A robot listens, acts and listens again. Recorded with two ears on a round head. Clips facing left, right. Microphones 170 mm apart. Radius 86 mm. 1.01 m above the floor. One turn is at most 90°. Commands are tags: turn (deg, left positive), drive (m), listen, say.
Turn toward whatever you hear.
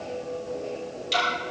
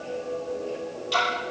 <turn deg="20"/>
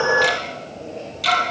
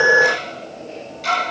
<turn deg="90"/>
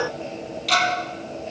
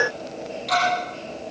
<turn deg="35"/>
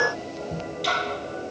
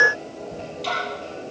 <turn deg="10"/>
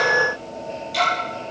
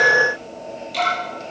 <say>Found it: ticking, straight ahead.</say>